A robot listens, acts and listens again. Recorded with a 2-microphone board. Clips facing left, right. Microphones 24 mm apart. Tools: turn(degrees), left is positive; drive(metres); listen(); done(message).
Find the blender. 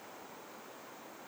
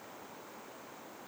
listen()
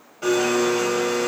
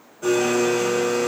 turn(degrees=65)
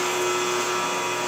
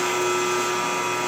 turn(degrees=10)
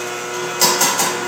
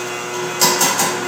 done("Facing the blender.")